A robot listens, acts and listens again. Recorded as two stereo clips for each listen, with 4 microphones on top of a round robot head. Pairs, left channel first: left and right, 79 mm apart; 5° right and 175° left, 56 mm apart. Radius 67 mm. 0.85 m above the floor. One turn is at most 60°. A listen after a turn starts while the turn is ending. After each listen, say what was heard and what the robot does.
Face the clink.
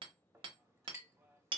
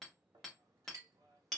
The clink: 150° right. Turn 60° right.
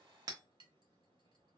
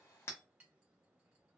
Nothing new. It was at 90° right. Turn 60° right.
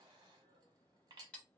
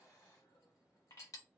The clink is now 45° right. Turn 45° right.
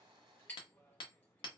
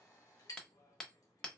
The clink is now 15° left. Turn 15° left.
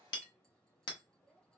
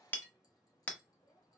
Keep listening.
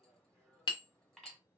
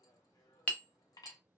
Facing the clink.